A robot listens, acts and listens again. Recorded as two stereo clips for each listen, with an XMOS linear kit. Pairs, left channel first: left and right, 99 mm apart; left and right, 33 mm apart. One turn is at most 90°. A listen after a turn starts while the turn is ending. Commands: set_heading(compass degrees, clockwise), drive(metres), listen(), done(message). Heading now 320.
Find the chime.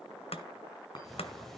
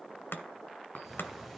set_heading(270)
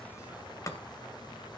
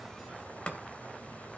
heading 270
listen()
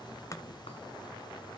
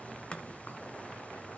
listen()
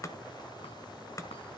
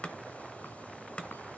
done("I heard a chime, but can't make it out now. It was about straight ahead or 80° left.")